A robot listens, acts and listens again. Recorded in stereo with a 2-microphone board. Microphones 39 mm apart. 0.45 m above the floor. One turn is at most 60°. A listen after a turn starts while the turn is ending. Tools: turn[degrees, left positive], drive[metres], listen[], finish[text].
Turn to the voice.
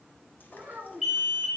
Thought: The child speaking: about 55° right or 125° right.
Action: turn[-55]
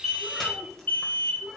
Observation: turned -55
Action: finish[Found it: a child speaking, straight ahead, 2 to 4 m away.]